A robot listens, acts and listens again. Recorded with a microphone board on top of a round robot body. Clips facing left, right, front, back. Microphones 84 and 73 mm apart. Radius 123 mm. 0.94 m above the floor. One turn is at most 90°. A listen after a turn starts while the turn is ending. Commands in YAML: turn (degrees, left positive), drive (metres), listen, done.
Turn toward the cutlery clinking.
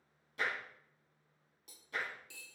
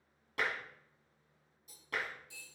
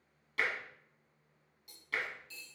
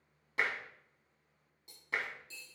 turn: 90
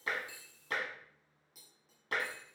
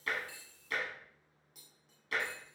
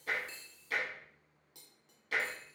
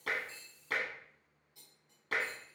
done: "Found it: cutlery clinking, straight ahead, 1 to 2 m away."